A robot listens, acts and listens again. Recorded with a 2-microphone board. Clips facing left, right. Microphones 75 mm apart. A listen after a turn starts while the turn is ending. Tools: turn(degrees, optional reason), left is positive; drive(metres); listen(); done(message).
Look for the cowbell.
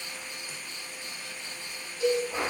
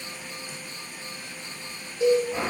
turn(degrees=-35, reason="The cowbell: about 35° right or 145° right.")
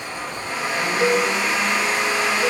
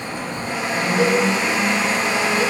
turn(degrees=-100, reason="So it is at 100° right.")
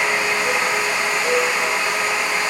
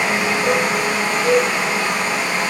turn(degrees=-10, reason="The cowbell is now 10° right.")
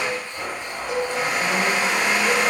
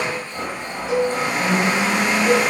done("Found it: a cowbell, straight ahead, 1 to 2 m away.")